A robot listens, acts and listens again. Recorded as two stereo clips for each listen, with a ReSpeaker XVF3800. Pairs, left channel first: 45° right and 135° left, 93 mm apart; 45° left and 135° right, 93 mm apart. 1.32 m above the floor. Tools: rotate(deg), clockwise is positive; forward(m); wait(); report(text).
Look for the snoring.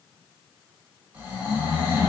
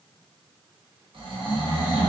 rotate(150)
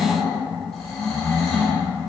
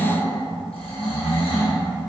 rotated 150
rotate(-45)
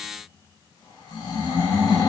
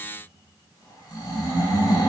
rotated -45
report("Found it: snoring, straight ahead, under 1 m away.")